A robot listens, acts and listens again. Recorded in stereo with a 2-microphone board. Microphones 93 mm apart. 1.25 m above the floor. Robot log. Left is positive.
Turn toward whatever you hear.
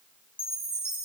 note: The chime: about 15° left or 165° left.
cmd yaw +15
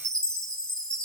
end: Facing the chime, over 4 m away.